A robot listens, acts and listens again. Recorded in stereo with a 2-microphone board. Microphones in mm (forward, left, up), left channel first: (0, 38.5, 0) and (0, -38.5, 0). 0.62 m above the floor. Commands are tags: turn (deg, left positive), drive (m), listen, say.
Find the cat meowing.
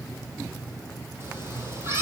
<turn deg="-35"/>
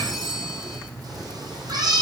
<turn deg="-115"/>
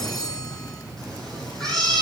<say>Found it: a cat meowing, straight ahead, over 4 m away.</say>